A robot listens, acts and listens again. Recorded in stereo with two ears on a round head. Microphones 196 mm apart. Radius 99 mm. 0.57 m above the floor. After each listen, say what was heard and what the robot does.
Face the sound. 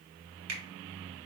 The finger snap: about 70° right or 110° right. Turn 70° right.
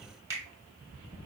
So it is at 15° right. Turn 15° right.
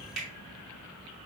Facing the finger snap, 1 to 2 m away.